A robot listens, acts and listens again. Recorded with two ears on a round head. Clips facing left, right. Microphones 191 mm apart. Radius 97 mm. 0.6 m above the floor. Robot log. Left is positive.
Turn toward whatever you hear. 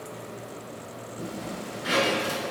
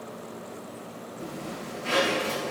note: The zipper: about 20° left or 160° left.
cmd yaw +20
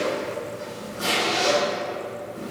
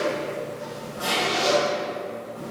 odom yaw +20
note: So it is at 140° left.
cmd yaw +140
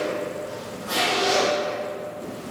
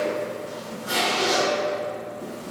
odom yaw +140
note: The zipper is now 30° right.
cmd yaw -30
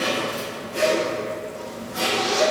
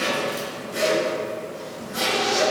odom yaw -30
note: The zipper is now 20° right.
cmd yaw -20
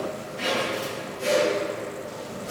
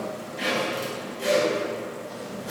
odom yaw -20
end: Facing the zipper.